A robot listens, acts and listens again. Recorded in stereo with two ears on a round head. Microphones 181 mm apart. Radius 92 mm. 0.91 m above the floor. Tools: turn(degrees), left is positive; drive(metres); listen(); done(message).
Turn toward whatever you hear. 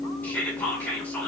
turn(degrees=30)
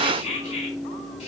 turn(degrees=145)
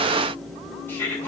turn(degrees=10)
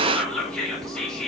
done("Facing the whispering.")